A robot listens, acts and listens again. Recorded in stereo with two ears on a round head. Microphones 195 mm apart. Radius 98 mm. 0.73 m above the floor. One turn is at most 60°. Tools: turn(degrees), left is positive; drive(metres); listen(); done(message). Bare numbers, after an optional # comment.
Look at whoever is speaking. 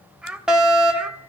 turn(-30)
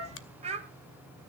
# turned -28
# So it is at 145° right.
turn(-60)
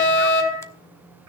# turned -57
# Nothing new. It was at 90° right.
turn(-60)
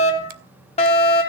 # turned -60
# Nothing new. It was at 30° right.
turn(-30)
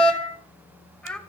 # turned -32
done("Facing the child speaking, 2 to 4 m away.")